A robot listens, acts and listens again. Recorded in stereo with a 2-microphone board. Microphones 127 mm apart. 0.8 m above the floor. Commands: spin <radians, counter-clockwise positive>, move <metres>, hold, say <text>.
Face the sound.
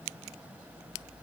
hold
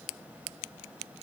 hold
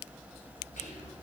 spin 1.57
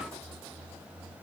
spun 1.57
hold
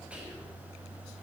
spin -0.17
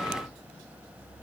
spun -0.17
hold
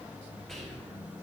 say Facing the whispering.